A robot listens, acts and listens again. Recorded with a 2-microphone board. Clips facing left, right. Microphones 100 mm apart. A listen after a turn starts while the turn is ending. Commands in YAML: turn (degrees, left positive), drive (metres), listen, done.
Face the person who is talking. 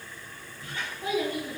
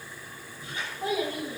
turn: -55
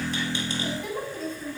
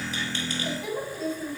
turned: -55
done: "Found it: a child speaking, straight ahead."